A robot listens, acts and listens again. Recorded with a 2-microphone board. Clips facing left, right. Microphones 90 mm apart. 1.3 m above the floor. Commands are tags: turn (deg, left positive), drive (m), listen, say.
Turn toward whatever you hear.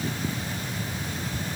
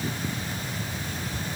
<listen/>
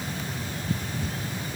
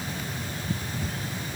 <listen/>
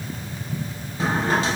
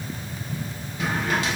<turn deg="35"/>
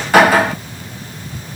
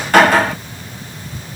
<say>Found it: a drawer, straight ahead.</say>